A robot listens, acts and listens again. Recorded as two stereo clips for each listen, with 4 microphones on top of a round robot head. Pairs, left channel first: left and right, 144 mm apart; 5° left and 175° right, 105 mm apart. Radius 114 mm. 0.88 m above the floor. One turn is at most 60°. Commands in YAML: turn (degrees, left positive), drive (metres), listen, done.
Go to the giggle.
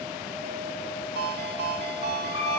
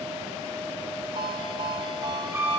listen: true
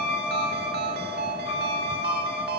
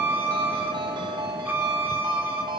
listen: true
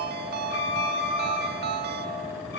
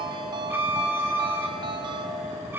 done: "I can't make out a giggle to turn to."